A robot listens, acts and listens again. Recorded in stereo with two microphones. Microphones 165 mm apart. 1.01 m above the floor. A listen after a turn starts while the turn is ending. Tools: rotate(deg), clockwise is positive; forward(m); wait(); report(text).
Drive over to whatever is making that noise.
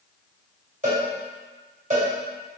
rotate(45)
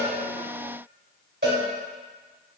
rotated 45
rotate(85)
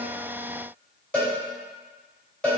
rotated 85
forward(1.0)
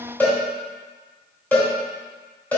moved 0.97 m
rotate(-10)
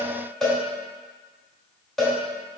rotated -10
forward(1.0)
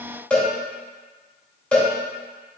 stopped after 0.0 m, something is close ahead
report("Arrived at the cowbell, straight ahead.")